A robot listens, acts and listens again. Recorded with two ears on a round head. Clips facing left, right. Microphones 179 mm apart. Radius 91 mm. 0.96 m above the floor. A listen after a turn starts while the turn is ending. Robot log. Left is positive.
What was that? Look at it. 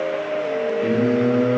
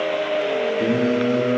note: The singing: about 70° right or 110° right.
cmd yaw -70
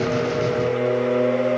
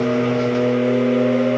end: Facing the singing.